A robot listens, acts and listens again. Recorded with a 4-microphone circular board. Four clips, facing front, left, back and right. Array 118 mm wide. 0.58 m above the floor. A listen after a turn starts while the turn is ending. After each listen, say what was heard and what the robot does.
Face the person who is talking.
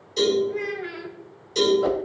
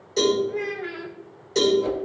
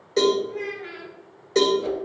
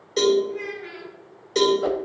The child speaking: 40° left. Turn 40° left.
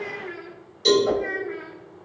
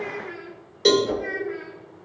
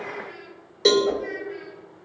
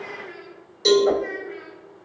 Found it: a child speaking, straight ahead.